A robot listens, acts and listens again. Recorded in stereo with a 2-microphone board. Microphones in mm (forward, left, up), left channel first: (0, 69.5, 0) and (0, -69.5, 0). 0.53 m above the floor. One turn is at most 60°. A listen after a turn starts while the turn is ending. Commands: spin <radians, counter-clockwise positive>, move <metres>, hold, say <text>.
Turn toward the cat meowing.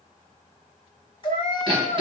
spin 0.70
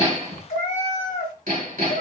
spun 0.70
spin 1.05
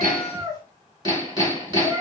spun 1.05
spin 0.52
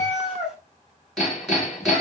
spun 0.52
say Facing the cat meowing.